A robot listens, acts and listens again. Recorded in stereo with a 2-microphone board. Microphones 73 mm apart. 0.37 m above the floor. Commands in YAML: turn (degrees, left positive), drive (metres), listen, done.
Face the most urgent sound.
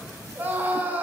turn: -25
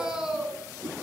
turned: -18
turn: -10
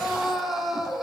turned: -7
done: "Found it: a scream, straight ahead, over 4 m away."